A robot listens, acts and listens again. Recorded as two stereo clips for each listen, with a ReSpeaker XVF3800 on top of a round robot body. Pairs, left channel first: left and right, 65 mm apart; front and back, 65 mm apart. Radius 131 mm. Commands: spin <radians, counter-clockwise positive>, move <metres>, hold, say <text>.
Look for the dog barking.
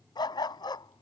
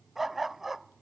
spin 1.66
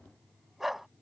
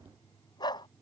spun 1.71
say Facing the dog barking.